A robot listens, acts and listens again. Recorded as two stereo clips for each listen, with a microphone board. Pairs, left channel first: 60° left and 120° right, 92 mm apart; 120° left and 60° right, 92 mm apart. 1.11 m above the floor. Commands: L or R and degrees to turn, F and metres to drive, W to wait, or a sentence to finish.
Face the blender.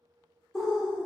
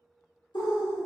W
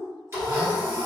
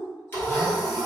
R175
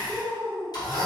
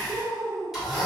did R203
L25
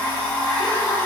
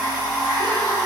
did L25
Facing the blender.